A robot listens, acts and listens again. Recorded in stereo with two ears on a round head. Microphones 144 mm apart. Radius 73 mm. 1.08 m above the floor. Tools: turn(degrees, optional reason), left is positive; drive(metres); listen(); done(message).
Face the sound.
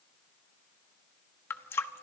turn(degrees=30)
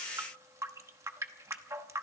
turn(degrees=-15, reason="So it is at 15° right.")
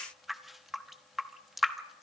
done("Found it: a running tap, straight ahead.")